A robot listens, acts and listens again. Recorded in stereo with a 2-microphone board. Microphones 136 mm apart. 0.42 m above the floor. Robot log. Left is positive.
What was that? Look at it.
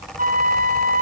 note: The flute: about 70° right or 110° right.
cmd yaw -70
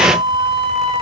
note: So it is at 40° right.
cmd yaw -40
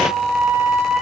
note: The flute is now 10° right.
cmd yaw -10
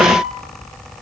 end: Found it: a flute, straight ahead, 2 to 4 m away.